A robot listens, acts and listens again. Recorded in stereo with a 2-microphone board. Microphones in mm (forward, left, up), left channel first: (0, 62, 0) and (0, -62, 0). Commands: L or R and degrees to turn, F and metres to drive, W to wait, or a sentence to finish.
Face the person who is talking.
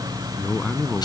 L30
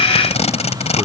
W
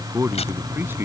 R15
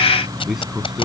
Facing the man speaking.